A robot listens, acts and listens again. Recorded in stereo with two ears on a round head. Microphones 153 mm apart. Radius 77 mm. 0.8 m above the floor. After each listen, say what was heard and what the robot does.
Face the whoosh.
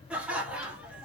Keep listening.
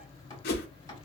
The whoosh: about 60° left or 120° left. Turn 60° left.
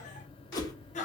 So it is at 25° left. Turn 25° left.
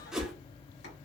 Facing the whoosh, under 1 m away.